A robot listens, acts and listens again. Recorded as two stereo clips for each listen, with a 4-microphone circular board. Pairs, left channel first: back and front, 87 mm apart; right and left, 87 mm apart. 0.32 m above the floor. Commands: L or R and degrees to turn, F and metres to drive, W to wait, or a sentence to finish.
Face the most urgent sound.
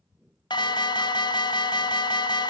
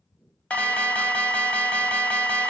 R165
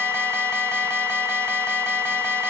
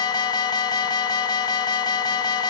R60
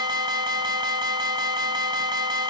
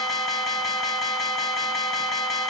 Found it: an alarm, straight ahead, 1 to 2 m away.